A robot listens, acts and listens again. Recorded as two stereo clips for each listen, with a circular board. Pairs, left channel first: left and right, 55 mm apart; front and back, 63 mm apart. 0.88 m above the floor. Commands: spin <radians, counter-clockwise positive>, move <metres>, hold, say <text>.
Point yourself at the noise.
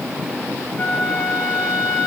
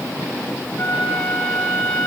spin 1.22
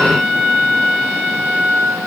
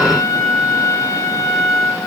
spin 0.17
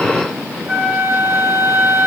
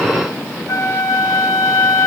say Found it: a flute, straight ahead, 2 to 4 m away.